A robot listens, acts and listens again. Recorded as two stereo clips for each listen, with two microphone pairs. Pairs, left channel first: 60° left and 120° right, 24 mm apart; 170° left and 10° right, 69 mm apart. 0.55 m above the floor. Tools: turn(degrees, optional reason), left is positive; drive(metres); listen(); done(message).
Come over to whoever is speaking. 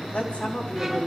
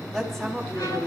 turn(degrees=85, reason="The woman speaking: 85° left.")
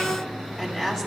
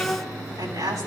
drive(metres=1.0)
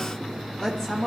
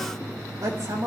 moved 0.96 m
drive(metres=1.0)
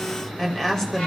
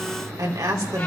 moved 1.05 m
drive(metres=1.0)
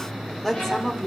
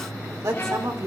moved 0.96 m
drive(metres=1.0)
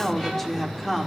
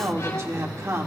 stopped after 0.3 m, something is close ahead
turn(degrees=-10, reason="The woman speaking is now 10° right.")
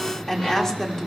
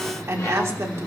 done("I am next to the woman speaking.")